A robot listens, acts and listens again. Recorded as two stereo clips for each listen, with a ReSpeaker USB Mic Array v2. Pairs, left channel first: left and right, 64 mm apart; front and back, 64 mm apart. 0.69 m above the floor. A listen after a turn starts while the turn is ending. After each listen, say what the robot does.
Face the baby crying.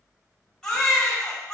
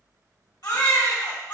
Turn 10° left.
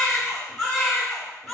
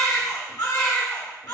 Found it: a baby crying, straight ahead.